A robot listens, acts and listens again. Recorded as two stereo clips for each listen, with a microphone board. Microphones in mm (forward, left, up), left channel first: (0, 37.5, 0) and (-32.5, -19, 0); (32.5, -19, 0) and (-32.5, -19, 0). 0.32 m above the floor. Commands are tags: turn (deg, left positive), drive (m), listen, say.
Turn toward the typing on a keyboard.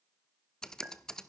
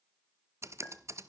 <turn deg="140"/>
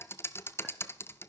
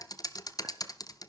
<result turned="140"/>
<turn deg="10"/>
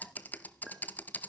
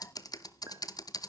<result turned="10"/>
<say>Found it: typing on a keyboard, straight ahead.</say>